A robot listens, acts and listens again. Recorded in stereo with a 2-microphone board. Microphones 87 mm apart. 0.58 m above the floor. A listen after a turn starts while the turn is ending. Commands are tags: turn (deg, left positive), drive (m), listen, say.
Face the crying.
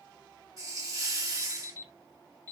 <listen/>
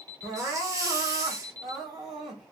<turn deg="30"/>
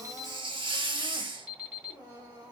<turn deg="150"/>
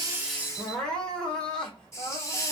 <say>Facing the crying, 1 to 2 m away.</say>